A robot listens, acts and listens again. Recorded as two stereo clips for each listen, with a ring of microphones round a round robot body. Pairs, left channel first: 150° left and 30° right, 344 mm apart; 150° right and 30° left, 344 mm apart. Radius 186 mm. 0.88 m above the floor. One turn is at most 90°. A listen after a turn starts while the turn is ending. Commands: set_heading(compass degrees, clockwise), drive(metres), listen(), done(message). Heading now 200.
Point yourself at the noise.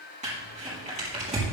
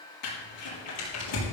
set_heading(290)
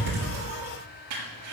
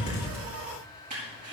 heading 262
set_heading(302)
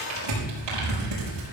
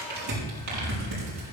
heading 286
set_heading(301)
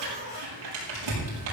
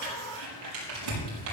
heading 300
done("Facing the crumpling.")